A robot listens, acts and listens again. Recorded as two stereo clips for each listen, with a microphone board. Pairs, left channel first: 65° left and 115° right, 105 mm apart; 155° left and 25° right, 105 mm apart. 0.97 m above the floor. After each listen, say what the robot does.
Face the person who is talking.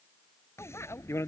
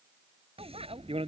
Keep listening.
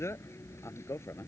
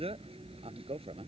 Keep listening.
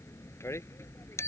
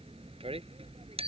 I can't make out anyone speaking to turn to.